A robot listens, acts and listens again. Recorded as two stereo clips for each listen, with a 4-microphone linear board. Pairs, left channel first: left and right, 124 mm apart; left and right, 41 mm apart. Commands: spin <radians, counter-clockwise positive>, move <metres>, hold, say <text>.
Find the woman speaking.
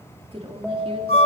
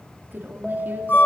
spin -0.96
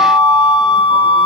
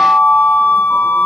hold
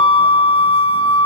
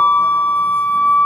hold
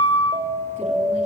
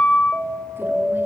say I heard a woman speaking, but can't make it out now. It was about straight ahead or 70° right.